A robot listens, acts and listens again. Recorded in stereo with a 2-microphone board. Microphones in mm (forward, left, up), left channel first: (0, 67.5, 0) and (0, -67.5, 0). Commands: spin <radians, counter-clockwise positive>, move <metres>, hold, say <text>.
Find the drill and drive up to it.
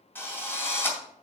spin 0.26
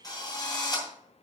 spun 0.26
spin 2.62
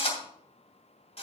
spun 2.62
spin 0.96
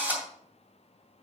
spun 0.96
spin -0.26
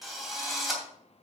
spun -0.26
move 1.0
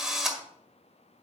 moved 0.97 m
move 1.0
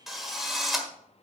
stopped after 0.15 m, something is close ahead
say Arrived at the drill, straight ahead.